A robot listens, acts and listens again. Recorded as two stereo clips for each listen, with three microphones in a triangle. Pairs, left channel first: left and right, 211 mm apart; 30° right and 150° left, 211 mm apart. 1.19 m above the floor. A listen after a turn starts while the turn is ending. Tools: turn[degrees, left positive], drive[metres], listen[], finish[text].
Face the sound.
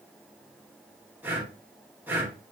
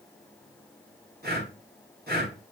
Thought: The breathing: 170° right.
Action: turn[-170]
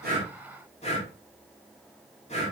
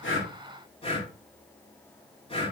Thought: The breathing is now 30° left.
Action: turn[30]
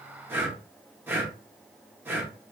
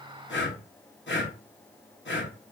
Thought: The breathing is now 10° right.
Action: turn[-10]
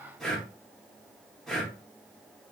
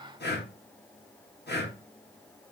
Action: finish[Facing the breathing, 1 to 2 m away.]